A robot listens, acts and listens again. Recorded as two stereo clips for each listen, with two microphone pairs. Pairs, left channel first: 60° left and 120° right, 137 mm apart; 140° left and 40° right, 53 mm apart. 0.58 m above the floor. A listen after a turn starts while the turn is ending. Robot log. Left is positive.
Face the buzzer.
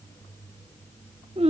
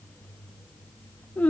cmd idle
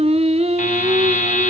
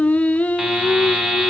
note: The buzzer: 40° left.
cmd yaw +40
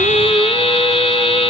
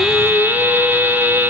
note: The buzzer is now 15° left.
cmd yaw +15
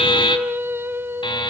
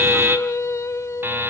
end: Facing the buzzer, 2 to 4 m away.